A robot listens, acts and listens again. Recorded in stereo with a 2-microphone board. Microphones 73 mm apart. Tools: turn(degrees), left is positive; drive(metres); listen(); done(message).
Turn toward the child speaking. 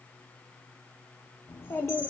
turn(degrees=25)
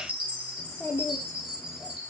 turn(degrees=20)
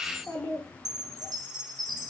turn(degrees=30)
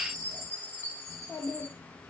turn(degrees=25)
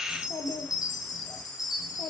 turn(degrees=130)
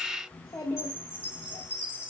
turn(degrees=35)
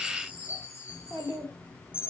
turn(degrees=-20)
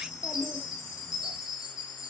listen()
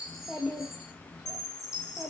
done("Found it: a child speaking, straight ahead.")